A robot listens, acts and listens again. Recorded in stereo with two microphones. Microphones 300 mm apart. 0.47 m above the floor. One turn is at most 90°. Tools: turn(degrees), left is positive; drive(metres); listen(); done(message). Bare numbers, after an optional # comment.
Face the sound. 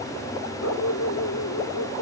# The dog barking: about 65° left or 115° left.
turn(65)
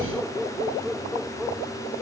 done("Found it: a dog barking, straight ahead.")